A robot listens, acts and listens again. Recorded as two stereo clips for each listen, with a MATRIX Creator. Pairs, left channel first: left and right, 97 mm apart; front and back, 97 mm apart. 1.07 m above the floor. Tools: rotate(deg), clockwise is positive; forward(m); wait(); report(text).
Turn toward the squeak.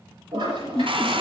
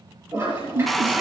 rotate(-175)
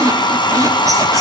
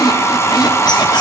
rotate(40)
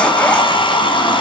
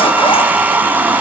wait()
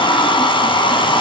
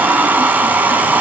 wait()
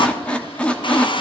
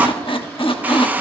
rotate(-10)
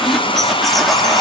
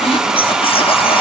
report("Facing the squeak, under 1 m away.")